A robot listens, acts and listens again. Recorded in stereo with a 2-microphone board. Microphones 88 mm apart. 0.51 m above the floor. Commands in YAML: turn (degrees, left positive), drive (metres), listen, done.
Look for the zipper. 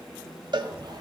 turn: -55
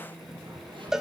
listen: true
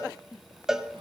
turn: -75
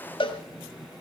listen: true
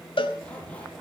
turn: 15
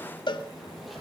listen: true
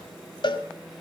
listen: true
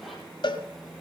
done: "I heard a zipper from this way, but can't make it out now."